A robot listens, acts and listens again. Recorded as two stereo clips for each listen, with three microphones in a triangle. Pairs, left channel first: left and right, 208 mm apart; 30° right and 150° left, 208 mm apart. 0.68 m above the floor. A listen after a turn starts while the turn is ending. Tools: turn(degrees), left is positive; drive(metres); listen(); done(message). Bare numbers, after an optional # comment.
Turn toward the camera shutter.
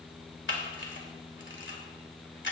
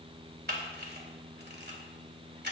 # The camera shutter: 115° left.
turn(115)
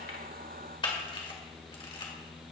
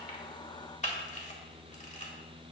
# The camera shutter is now 25° left.
turn(25)
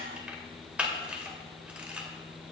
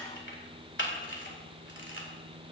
done("Found it: a camera shutter, straight ahead, 1 to 2 m away.")